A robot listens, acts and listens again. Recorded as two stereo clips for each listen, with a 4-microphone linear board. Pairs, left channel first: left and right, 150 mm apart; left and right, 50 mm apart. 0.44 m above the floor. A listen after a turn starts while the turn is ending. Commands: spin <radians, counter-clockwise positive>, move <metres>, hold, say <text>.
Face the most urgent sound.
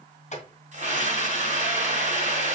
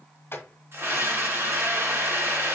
spin -0.87
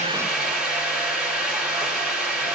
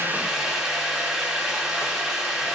say Facing the scream.